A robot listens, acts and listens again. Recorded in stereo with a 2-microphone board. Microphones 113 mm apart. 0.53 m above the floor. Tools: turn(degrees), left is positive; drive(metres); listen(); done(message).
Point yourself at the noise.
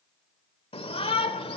turn(degrees=55)
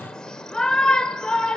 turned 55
turn(degrees=10)
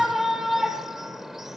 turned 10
done("Found it: a shout, straight ahead.")